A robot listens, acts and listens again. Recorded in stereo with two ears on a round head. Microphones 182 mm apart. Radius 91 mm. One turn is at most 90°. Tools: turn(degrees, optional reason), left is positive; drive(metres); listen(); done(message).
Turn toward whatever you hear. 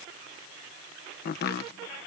turn(degrees=50, reason="The chopping: about 50° left or 130° left.")
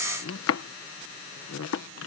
turn(degrees=75, reason="So it is at 75° left.")
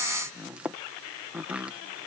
done("Found it: chopping, straight ahead.")